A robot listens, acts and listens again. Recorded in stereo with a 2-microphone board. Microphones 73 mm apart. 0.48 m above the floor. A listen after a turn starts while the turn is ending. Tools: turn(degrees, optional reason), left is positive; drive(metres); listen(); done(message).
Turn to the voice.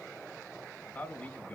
turn(degrees=20, reason="The man speaking: about 20° left or 160° left.")
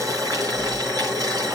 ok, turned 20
listen()
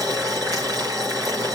listen()
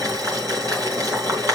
done("I heard a man speaking, but can't make it out now. It was about straight ahead or 140° left.")